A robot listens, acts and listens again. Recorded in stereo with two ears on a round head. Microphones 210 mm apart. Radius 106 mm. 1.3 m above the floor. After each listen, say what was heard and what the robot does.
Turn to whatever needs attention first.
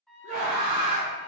The scream: about 35° right or 145° right. Turn 35° right.
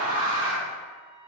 So it is at 115° right. Turn 115° right.
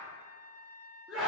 Found it: a scream, straight ahead.